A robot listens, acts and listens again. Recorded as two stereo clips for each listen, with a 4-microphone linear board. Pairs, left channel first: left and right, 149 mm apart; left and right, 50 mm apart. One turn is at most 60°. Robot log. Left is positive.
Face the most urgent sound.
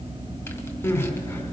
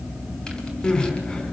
note: The crying: about 20° left or 160° left.
cmd yaw +20
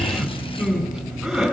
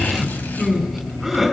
end: Facing the crying, 2 to 4 m away.